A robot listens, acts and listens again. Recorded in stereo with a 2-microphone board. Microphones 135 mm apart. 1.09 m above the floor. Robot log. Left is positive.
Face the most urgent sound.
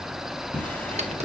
cmd idle
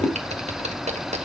cmd idle
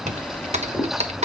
end: I can't make out anything urgent, only a drawer and typing on a keyboard.